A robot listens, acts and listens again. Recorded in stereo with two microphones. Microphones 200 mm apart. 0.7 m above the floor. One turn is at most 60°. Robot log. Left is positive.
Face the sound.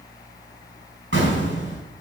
cmd yaw -60
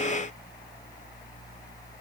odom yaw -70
note: Nothing new. It was at 20° right.
cmd yaw -20
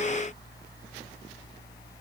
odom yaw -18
end: I heard an explosion from this way, but can't make it out now.